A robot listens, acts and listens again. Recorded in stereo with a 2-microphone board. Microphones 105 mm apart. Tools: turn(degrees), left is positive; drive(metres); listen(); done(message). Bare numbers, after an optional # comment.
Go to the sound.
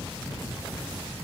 listen()
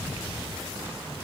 listen()
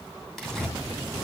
turn(30)
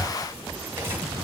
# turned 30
# So it is at 25° right.
turn(-25)
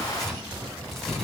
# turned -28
drive(1.0)
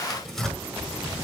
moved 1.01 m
drive(1.0)
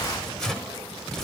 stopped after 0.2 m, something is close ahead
done("Arrived at the tearing paper, straight ahead.")